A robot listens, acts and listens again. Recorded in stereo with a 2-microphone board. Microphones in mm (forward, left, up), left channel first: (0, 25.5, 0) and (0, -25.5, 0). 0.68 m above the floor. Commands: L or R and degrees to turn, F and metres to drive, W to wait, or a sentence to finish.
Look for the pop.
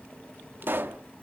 R45
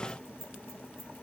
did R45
W
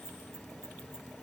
I heard a pop, but can't make it out now. It was about straight ahead or 90° right.